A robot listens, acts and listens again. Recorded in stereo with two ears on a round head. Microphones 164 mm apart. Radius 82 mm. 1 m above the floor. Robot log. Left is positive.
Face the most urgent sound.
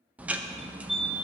cmd yaw +30
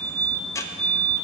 note: So it is at 30° right.
cmd yaw -30
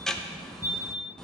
note: The fire alarm is now 10° right.
cmd yaw -10
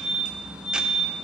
end: Facing the fire alarm, 2 to 4 m away.